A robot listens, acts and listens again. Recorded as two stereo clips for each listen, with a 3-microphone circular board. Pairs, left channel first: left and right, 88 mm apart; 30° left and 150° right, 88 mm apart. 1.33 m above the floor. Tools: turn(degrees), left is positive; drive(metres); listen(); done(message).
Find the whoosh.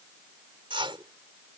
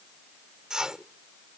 turn(degrees=-70)
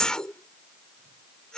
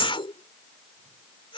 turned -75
done("Found it: a whoosh, straight ahead.")